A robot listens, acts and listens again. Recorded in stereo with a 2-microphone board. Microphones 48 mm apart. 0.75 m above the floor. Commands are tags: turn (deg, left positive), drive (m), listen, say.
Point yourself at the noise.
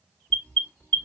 <turn deg="25"/>
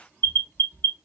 <turn deg="130"/>
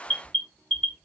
<turn deg="25"/>
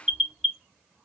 <say>Found it: an alarm, straight ahead.</say>